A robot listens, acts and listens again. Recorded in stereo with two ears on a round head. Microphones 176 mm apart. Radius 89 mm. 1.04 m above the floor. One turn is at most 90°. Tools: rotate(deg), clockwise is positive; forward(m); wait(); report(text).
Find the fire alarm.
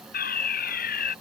rotate(-45)
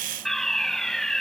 report("Facing the fire alarm.")